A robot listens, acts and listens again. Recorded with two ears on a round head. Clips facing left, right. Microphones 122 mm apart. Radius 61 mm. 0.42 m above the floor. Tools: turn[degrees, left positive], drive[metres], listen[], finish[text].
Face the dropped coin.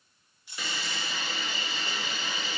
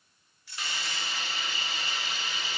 Thought: The dropped coin: about 15° left or 165° left.
Action: turn[15]
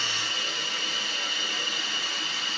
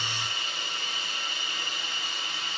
Action: listen[]
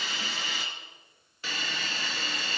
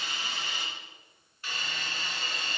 Action: finish[I heard a dropped coin, but can't make it out now. It was about straight ahead or 150° left.]